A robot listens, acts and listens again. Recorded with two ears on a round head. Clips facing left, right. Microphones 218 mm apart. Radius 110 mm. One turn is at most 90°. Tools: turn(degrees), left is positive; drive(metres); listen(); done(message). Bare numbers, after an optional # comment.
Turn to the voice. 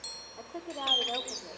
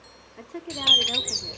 # The woman speaking: about 40° right or 140° right.
turn(-40)
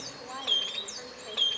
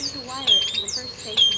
listen()
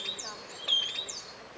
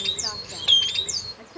# So it is at 100° right.
turn(-90)
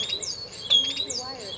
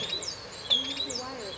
# Nothing new. It was at 10° right.
turn(-10)
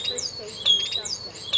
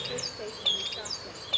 listen()
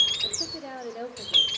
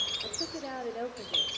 done("Facing the woman speaking, 1 to 2 m away.")